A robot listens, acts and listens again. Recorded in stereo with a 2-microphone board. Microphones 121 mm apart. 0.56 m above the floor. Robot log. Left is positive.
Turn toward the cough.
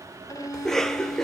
cmd yaw +30
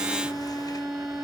cmd idle
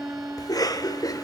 note: So it is at 145° left.
cmd yaw +145
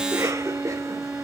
note: The cough is now 25° right.
cmd yaw -25
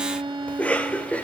note: The cough is now 10° left.
cmd yaw +10
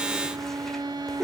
end: Found it: a cough, straight ahead, 1 to 2 m away.